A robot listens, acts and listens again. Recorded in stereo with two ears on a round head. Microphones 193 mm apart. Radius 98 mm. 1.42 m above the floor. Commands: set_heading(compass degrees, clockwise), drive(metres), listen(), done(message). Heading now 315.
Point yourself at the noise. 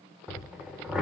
set_heading(345)
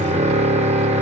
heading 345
set_heading(130)
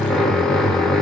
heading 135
done("Facing the drill, under 1 m away.")